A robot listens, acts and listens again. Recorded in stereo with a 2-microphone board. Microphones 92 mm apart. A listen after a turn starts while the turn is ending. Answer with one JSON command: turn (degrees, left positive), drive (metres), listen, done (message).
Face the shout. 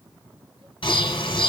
{"listen": true}
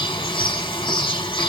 {"listen": true}
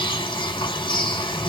{"done": "I can't make out a shout, only a bird."}